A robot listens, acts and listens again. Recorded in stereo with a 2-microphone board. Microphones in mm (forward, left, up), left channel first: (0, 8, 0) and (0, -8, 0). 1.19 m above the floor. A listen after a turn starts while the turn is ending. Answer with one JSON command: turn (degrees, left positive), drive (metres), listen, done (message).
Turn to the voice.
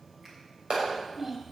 {"turn": -25}
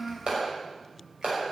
{"done": "Found it: a child speaking, straight ahead."}